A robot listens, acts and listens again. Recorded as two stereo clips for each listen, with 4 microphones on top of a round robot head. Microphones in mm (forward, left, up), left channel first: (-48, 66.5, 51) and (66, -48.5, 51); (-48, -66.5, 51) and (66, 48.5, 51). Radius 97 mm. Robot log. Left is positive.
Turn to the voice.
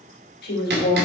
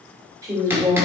note: The woman speaking: 115° left.
cmd yaw +115
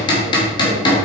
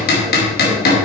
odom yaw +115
cmd idle
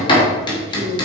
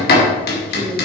cmd idle
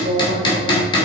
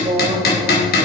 note: The woman speaking is now 15° right.
cmd yaw -15
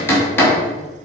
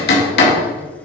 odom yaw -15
cmd idle
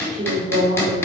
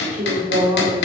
end: Facing the woman speaking, 2 to 4 m away.